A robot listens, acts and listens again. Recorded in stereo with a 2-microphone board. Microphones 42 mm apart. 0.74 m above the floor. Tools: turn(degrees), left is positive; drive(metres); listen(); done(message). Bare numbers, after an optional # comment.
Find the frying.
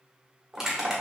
listen()
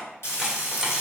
turn(90)
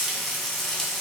done("Facing the frying.")